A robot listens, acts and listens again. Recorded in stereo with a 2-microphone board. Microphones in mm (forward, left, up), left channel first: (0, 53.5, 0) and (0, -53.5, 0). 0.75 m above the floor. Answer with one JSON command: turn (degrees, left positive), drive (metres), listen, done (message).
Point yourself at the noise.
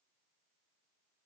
{"listen": true}
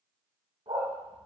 {"turn": -65}
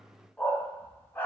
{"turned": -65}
{"turn": 20}
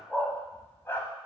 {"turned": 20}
{"turn": 20}
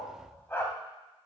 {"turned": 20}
{"turn": 20}
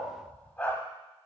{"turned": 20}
{"turn": 15}
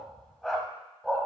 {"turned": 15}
{"done": "Facing the dog barking."}